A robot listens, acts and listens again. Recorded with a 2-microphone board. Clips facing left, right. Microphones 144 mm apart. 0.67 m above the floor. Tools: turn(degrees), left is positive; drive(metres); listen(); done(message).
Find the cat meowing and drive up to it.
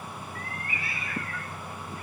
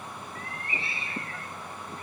turn(degrees=-30)
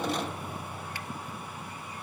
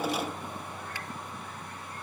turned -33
listen()
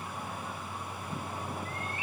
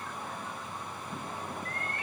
turn(degrees=-120)
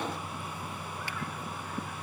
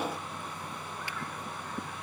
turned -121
listen()
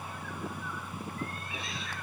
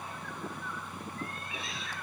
drive(metres=1.0)
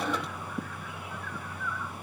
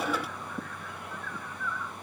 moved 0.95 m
drive(metres=1.0)
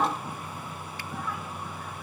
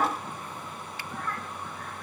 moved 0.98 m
listen()
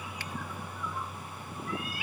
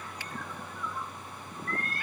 turn(degrees=10)
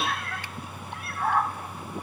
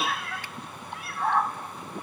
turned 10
drive(metres=1.0)
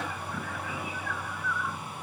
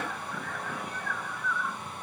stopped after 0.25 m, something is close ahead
done("I am next to the cat meowing.")